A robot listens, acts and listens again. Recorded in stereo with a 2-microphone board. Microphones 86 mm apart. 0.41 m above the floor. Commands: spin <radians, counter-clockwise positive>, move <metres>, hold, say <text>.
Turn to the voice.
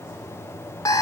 hold
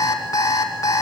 hold
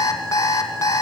say I can't make out anyone speaking, only an alarm clock.